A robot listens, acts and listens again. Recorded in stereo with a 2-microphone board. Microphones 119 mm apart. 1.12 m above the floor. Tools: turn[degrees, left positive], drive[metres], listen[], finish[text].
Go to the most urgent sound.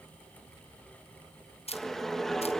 Action: listen[]
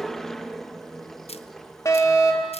Thought: The fire alarm: about 25° left or 155° left.
Action: turn[25]
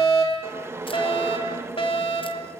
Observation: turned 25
Thought: So it is at 125° left.
Action: turn[125]
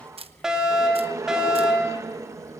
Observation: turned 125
Action: drive[1.0]
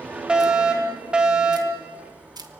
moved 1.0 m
Thought: The fire alarm is now 10° right.
Action: turn[-10]
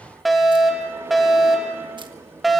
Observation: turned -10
Action: drive[1.0]
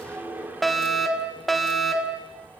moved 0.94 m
Action: drive[1.0]
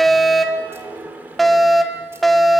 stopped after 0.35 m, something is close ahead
Action: finish[I am next to the fire alarm.]